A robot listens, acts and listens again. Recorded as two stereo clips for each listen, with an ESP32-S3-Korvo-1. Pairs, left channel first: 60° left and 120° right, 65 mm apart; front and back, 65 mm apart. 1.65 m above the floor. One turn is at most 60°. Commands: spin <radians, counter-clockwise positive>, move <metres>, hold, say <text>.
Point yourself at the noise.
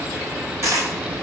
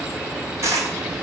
spin -1.05
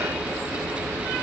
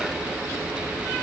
spin -1.05
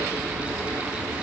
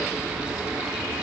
spin -0.52
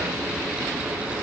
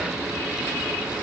say Facing where the dropped coin came from. I can't hear it now.